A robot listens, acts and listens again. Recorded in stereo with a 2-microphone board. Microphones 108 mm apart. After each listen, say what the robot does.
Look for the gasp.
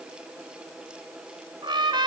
Keep listening.
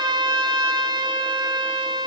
Keep listening.
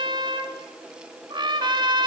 I can't make out a gasp to turn to.